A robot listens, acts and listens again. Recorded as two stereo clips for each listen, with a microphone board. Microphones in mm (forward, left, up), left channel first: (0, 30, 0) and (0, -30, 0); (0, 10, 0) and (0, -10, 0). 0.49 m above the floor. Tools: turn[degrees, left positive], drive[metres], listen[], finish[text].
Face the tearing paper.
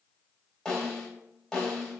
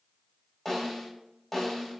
Action: listen[]
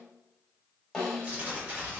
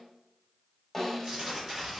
Thought: The tearing paper: about 25° right or 155° right.
Action: turn[-25]
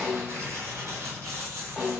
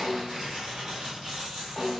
Thought: So it is at 125° right.
Action: turn[-125]
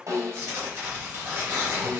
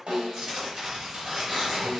Thought: The tearing paper is now 45° right.
Action: turn[-45]
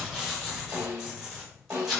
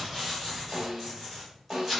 Action: finish[Facing the tearing paper, 1 to 2 m away.]